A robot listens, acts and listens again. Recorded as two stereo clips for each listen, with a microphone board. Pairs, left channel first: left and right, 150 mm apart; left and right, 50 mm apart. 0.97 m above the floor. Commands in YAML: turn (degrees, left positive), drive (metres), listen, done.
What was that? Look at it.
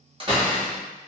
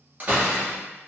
turn: -35
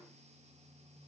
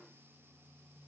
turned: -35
listen: true
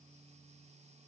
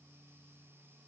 done: "I heard a door slam, but can't make it out now. It was about straight ahead or 110° right."